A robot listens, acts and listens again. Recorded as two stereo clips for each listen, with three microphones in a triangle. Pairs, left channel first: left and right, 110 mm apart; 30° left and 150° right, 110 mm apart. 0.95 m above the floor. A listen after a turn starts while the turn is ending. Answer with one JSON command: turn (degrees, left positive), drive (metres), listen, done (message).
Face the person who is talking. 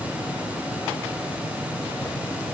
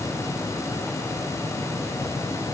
{"listen": true}
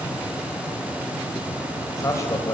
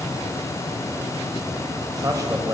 {"turn": 155}
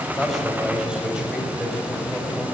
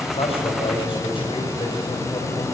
{"turn": -10}
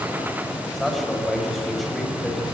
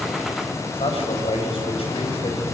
{"done": "Facing the man speaking."}